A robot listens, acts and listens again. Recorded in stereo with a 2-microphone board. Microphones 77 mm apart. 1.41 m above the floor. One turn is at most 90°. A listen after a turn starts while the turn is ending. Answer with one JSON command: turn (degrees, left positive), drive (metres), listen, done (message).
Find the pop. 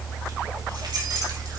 {"listen": true}
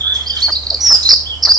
{"listen": true}
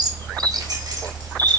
{"done": "I can't make out a pop, only a bird."}